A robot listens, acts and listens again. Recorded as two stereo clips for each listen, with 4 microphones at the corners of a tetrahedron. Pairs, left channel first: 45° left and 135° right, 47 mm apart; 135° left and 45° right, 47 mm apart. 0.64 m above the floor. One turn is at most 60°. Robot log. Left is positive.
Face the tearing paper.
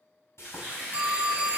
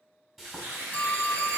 note: The tearing paper: 75° right.
cmd yaw -60
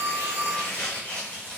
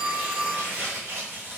note: The tearing paper is now 15° right.
cmd yaw -15
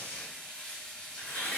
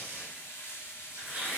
end: Found it: tearing paper, straight ahead, 1 to 2 m away.